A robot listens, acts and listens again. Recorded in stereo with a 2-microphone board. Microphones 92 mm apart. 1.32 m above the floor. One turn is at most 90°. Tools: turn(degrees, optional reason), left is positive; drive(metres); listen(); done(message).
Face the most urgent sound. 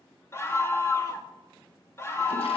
turn(degrees=25, reason="The scream: about 25° left or 155° left.")
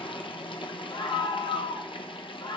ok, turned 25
turn(degrees=90, reason="So it is at 130° left.")
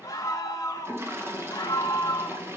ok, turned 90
turn(degrees=35, reason="The scream is now 35° left.")
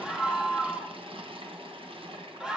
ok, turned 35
turn(degrees=-10, reason="The scream is now 10° right.")
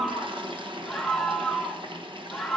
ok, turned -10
done("Found it: a scream, straight ahead.")